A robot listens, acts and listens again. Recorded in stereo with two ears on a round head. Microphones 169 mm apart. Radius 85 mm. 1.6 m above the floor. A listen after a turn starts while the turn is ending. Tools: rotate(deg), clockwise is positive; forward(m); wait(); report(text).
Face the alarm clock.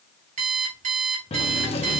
rotate(45)
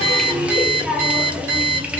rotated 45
rotate(90)
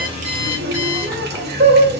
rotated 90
wait()
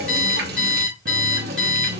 report("Found it: an alarm clock, straight ahead.")